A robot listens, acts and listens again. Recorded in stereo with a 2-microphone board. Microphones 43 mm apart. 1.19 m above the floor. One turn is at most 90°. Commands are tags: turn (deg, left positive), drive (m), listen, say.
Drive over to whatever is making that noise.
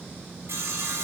<turn deg="-90"/>
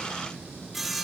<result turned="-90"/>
<drive m="1.0"/>
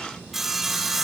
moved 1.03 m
<drive m="1.0"/>
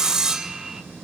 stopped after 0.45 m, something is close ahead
<turn deg="-15"/>
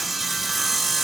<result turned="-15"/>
<say>Arrived at the sawing, straight ahead.</say>